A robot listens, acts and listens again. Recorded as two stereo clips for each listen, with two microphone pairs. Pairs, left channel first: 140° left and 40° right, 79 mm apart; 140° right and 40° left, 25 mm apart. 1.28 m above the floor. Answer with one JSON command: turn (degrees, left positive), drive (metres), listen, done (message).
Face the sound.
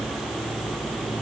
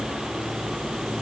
{"listen": true}
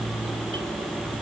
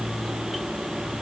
{"listen": true}
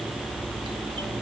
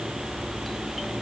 {"done": "I can't make out anything."}